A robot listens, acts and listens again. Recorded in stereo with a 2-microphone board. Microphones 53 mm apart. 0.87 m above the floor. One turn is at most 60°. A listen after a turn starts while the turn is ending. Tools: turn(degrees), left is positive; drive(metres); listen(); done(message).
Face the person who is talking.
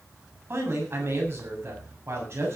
turn(degrees=-50)
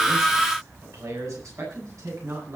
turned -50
turn(degrees=-60)
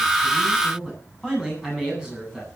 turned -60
turn(degrees=-15)
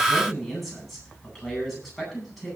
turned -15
done("Facing the man speaking.")